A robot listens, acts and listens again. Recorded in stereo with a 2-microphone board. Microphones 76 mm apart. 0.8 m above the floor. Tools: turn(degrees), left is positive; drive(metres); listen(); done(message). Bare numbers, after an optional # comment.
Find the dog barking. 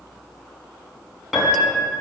listen()
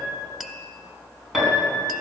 listen()
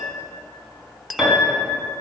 done("I can't make out a dog barking, only a piano.")